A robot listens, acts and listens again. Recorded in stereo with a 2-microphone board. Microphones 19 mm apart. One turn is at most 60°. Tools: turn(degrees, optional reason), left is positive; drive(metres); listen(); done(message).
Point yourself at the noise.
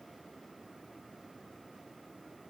listen()
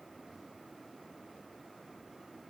listen()
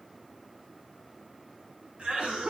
turn(degrees=-60, reason="The cough: about 60° right or 120° right.")
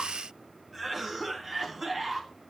turn(degrees=-15, reason="So it is at 15° right.")
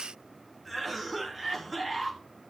done("Found it: a cough, straight ahead, 2 to 4 m away.")